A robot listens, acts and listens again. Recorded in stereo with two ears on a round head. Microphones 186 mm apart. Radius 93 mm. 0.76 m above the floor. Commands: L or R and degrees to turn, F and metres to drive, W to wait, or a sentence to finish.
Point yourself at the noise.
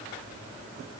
W
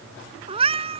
R30
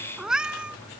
Found it: a cat meowing, straight ahead.